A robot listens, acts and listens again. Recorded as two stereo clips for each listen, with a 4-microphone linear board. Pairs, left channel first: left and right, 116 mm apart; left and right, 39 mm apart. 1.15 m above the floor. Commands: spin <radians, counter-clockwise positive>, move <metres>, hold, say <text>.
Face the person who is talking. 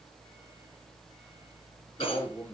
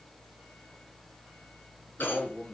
spin 0.35
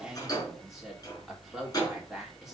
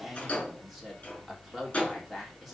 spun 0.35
say Found it: a man speaking, straight ahead.